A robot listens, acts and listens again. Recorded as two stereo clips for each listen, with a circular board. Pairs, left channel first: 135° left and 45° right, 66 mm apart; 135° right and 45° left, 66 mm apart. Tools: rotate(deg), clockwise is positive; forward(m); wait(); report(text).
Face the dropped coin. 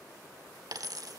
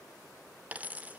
rotate(25)
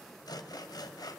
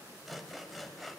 report("I heard a dropped coin from this way, but can't make it out now.")